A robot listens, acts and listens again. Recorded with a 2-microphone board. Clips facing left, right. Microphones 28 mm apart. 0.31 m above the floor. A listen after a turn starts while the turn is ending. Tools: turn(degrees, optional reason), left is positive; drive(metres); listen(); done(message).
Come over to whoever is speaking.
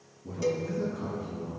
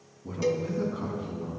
turn(degrees=-50, reason="The man speaking: about 50° right or 130° right.")
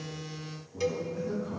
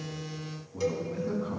turn(degrees=-75, reason="So it is at 75° right.")
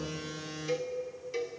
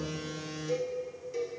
listen()
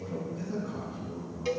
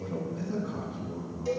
turn(degrees=-20, reason="The man speaking is now 20° right.")
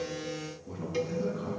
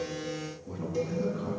drive(metres=1.0)
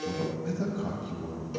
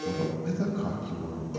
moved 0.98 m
turn(degrees=-10, reason="The man speaking is now 10° right.")
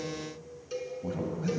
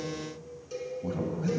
drive(metres=1.0)
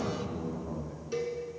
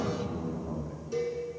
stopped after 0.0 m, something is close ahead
done("Arrived at the man speaking, straight ahead.")